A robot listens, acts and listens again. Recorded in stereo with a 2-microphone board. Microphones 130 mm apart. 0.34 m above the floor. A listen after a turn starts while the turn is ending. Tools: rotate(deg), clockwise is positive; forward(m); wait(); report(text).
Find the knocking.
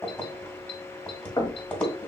rotate(-25)
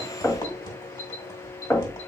rotate(-10)
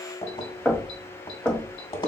report("Found it: knocking, straight ahead, 1 to 2 m away.")